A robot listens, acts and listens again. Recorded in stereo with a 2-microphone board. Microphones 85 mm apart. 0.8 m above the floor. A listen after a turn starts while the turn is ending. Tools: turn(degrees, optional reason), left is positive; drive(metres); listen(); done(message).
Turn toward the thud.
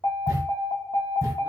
turn(degrees=-35, reason="The thud: about 35° right or 145° right.")
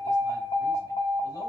listen()
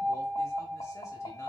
done("I heard a thud, but can't make it out now. It was about straight ahead or 110° right.")